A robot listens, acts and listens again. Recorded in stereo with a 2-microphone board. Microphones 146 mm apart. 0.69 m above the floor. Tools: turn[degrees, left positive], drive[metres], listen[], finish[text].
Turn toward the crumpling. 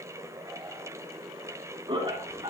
Action: listen[]
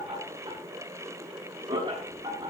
Action: listen[]
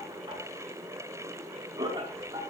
Action: finish[I can't make out crumpling, only laughter.]